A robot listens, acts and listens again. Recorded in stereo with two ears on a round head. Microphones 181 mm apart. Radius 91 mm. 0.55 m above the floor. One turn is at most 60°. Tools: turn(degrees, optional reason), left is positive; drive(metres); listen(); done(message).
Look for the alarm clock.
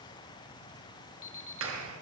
turn(degrees=60, reason="The alarm clock: about 70° left or 110° left.")
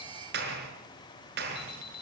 turn(degrees=50, reason="So it is at 50° left.")
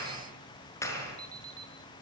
turn(degrees=-20, reason="The alarm clock is now 20° right.")
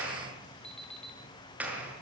done("Found it: an alarm clock, straight ahead, 2 to 4 m away.")